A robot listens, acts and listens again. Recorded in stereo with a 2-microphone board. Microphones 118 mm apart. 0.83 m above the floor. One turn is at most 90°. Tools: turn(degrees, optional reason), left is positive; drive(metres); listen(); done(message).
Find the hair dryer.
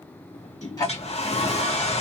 turn(degrees=55, reason="The hair dryer: about 55° left or 125° left.")
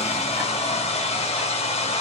turn(degrees=60, reason="So it is at 60° left.")
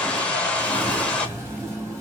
turn(degrees=10, reason="The hair dryer is now 10° left.")
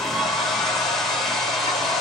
done("Facing the hair dryer, under 1 m away.")